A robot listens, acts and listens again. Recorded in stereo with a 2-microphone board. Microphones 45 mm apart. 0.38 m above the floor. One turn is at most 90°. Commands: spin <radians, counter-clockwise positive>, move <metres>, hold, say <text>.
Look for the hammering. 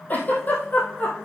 hold
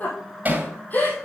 spin -0.70
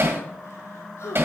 spin -1.57
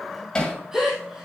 spin 0.35
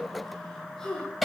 say Facing the hammering.